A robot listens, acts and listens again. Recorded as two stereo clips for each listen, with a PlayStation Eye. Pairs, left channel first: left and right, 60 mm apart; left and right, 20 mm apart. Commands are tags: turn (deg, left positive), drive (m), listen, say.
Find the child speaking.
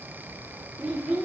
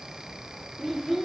<turn deg="-15"/>
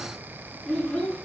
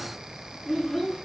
<turn deg="15"/>
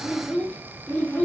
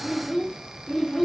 <turn deg="25"/>
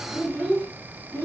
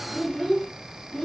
<turn deg="20"/>
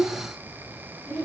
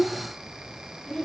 <turn deg="15"/>
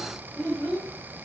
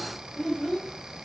<say>Facing the child speaking, 1 to 2 m away.</say>